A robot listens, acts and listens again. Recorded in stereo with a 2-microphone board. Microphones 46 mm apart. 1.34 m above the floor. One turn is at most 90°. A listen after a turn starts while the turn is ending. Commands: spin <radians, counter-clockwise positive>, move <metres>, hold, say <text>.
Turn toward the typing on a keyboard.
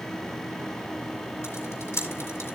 spin 1.57
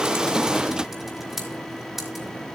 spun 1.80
say Found it: typing on a keyboard, straight ahead.